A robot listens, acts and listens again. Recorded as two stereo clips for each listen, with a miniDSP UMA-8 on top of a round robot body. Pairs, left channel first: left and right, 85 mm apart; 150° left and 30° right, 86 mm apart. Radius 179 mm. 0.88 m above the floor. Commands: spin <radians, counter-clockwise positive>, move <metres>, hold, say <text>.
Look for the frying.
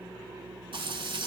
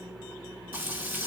spin -1.75
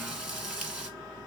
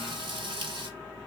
spin -0.17
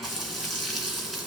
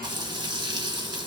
say Facing the frying, 1 to 2 m away.